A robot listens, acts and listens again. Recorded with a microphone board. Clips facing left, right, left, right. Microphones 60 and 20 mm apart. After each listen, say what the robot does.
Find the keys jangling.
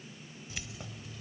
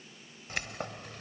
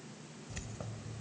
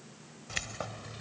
Turn 65° right.
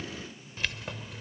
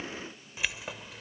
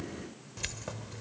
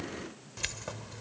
Found it: keys jangling, straight ahead.